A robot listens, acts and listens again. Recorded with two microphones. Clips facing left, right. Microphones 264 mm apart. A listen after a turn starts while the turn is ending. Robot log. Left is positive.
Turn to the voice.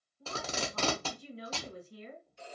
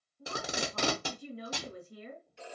note: The woman speaking: about 55° right or 125° right.
cmd yaw -55
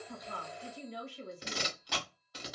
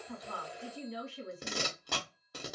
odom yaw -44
note: So it is at 75° right.
cmd yaw -75
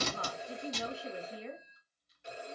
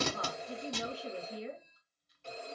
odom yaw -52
note: The woman speaking is now 20° right.
cmd yaw -20
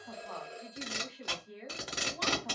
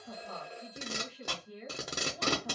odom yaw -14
note: The woman speaking is now 10° right.
cmd yaw -10
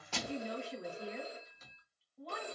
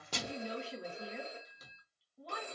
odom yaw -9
end: Found it: a woman speaking, straight ahead.